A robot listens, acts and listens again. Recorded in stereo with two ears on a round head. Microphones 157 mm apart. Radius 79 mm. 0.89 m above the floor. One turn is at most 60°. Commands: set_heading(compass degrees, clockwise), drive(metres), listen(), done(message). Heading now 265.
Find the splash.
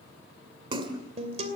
set_heading(295)
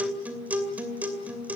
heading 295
listen()
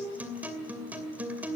done("I heard a splash, but can't make it out now. It was about straight ahead or 120° right.")